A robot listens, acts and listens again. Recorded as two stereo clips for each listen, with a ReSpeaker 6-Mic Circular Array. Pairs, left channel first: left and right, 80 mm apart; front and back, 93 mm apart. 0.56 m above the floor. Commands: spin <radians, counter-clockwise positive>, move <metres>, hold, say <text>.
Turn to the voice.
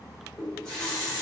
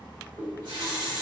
hold
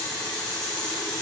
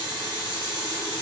hold
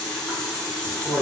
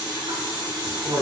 spin -2.71
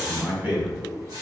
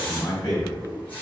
spin -0.52
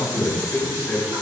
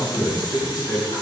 spin 0.26
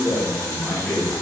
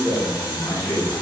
say Facing the man speaking, 1 to 2 m away.